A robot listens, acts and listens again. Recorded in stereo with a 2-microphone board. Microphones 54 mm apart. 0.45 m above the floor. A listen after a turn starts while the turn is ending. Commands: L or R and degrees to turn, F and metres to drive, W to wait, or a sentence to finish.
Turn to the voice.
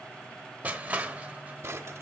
W
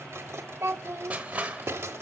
R55
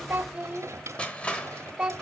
R25
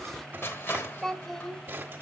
Found it: a child speaking, straight ahead.